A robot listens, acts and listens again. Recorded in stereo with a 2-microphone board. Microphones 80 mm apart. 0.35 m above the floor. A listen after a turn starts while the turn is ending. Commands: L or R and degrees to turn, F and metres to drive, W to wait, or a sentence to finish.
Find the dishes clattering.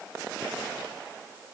W
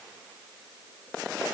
W
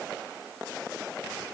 I can't make out dishes clattering.